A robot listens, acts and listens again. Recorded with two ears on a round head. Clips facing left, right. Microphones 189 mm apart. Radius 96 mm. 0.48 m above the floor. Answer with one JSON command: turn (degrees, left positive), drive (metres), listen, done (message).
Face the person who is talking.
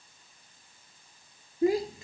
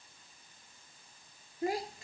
{"turn": 70}
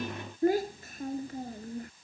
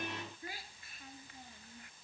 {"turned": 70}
{"turn": 35}
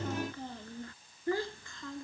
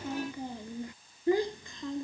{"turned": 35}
{"turn": -15}
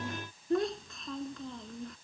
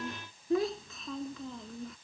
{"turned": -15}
{"done": "Facing the child speaking."}